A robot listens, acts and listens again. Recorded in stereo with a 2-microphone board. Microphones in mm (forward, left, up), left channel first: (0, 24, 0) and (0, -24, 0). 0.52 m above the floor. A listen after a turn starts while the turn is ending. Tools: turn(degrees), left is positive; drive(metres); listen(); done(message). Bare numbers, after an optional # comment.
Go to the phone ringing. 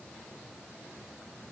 listen()
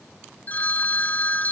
# The phone ringing: about 40° left or 140° left.
turn(40)
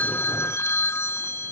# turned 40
# So it is at 100° left.
turn(100)
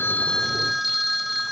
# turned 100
drive(1.0)
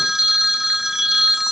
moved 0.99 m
# The phone ringing is now 10° right.
turn(-10)
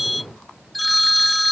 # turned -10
drive(1.0)
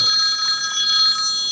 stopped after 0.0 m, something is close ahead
done("I am next to the phone ringing.")